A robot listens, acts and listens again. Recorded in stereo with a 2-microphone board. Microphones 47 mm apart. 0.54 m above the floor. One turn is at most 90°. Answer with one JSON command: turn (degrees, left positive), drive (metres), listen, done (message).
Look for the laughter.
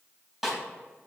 {"listen": true}
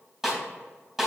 {"listen": true}
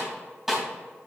{"done": "I can't make out laughter to turn to."}